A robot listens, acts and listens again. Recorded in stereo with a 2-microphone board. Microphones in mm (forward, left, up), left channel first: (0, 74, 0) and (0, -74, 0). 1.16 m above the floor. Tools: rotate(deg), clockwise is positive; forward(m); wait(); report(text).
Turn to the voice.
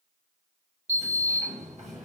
wait()
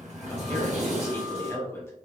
rotate(-20)
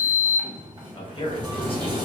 rotate(-140)
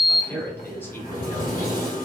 rotate(-15)
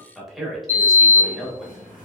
report("Found it: a man speaking, straight ahead.")